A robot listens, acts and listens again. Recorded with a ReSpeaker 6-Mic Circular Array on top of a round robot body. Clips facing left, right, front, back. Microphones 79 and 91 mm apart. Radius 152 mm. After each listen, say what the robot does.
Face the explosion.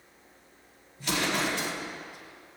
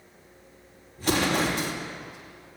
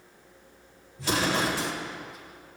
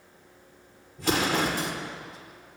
Turn 140° right.
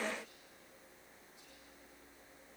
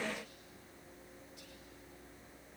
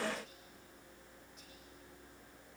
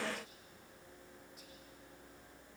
I heard an explosion from this way, but can't make it out now.